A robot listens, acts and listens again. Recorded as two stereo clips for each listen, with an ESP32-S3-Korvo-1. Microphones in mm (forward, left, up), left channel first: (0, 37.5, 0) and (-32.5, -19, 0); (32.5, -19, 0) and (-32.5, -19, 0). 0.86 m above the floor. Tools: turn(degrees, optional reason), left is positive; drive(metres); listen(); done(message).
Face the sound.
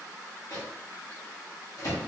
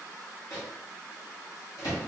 turn(degrees=30, reason="The microwave: 30° left.")
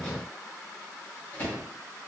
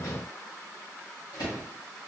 done("Facing the microwave.")